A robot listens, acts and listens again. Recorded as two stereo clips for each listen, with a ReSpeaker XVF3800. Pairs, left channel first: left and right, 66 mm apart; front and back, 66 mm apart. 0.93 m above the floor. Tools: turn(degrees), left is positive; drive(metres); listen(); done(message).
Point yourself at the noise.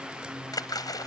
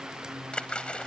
turn(degrees=75)
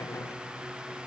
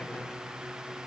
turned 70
done("I heard a splash from this way, but can't make it out now.")